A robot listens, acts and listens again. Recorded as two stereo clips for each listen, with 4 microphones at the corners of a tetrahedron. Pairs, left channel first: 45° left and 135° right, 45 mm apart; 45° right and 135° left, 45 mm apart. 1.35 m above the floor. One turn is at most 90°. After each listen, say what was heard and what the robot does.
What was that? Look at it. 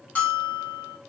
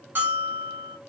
The bell: 100° left. Turn 90° left.
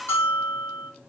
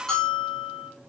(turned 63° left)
The bell is now 35° left. Turn 35° left.
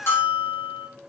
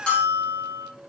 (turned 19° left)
The bell is now 15° left. Turn 15° left.
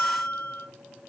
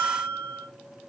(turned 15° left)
Facing the bell, 1 to 2 m away.